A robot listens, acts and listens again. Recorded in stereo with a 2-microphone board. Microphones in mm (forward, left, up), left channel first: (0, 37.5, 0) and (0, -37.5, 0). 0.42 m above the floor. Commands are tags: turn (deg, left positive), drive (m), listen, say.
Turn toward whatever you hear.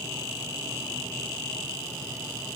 <listen/>
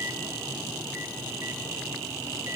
<listen/>
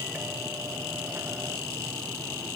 <say>I can't make out anything to turn to.</say>